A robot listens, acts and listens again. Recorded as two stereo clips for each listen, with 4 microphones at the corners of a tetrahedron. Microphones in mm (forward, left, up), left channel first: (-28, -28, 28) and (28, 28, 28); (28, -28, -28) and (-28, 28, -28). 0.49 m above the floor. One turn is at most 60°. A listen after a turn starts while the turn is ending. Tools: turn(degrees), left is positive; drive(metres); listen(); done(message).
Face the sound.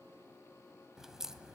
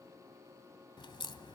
turn(degrees=-35)
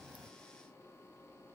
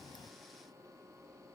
done("I heard a crack from this way, but can't make it out now.")